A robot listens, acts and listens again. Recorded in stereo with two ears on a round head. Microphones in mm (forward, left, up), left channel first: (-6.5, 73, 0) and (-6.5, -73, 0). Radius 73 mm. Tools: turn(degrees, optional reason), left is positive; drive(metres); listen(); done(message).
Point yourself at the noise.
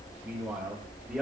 turn(degrees=-30)
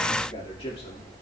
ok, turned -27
turn(degrees=35, reason="So it is at 35° left.")
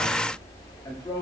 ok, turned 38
turn(degrees=25, reason="The man speaking is now 25° left.")
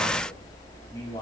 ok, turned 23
turn(degrees=25, reason="The man speaking is now 25° left.")
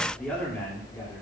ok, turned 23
turn(degrees=15, reason="The man speaking is now 15° left.")
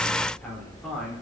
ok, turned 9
done("Facing the man speaking, 2 to 4 m away.")